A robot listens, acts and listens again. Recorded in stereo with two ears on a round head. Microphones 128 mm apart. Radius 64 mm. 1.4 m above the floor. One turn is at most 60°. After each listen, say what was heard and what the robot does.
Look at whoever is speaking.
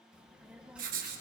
Turn 30° right.
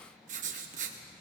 So it is at 25° left. Turn 25° left.
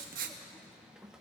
Facing the child speaking, 1 to 2 m away.